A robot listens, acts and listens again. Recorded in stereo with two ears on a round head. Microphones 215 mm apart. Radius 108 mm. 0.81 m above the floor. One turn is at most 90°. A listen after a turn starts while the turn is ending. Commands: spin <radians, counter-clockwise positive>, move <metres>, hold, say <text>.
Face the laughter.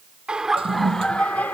spin 0.52
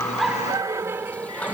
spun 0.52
say Facing the laughter.